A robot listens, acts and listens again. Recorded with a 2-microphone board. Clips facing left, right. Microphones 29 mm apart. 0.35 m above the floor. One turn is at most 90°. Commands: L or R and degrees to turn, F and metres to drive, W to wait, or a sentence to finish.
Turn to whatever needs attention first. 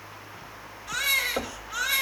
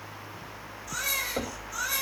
L45
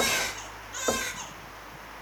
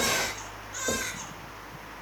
Facing the baby crying, 2 to 4 m away.